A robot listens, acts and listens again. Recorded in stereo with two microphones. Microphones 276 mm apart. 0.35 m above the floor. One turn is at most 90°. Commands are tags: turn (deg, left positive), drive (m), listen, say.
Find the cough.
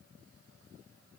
<listen/>
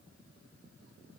<listen/>
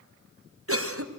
<turn deg="-50"/>
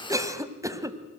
<turn deg="-10"/>
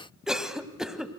<say>Found it: a cough, straight ahead, 1 to 2 m away.</say>